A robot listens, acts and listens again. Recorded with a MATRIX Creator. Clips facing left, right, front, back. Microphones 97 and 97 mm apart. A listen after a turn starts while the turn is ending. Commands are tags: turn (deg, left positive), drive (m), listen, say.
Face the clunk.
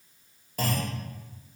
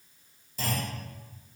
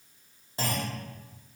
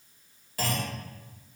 <turn deg="65"/>
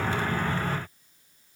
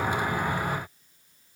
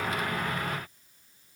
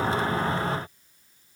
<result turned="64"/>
<say>I heard a clunk from this way, but can't make it out now.</say>